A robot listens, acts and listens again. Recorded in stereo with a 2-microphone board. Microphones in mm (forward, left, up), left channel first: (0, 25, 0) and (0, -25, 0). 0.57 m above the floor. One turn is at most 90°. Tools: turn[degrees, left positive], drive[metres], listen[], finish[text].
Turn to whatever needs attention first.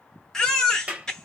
Action: turn[30]
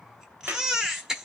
Thought: So it is at 15° right.
Action: turn[-15]
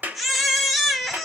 Action: finish[Facing the baby crying.]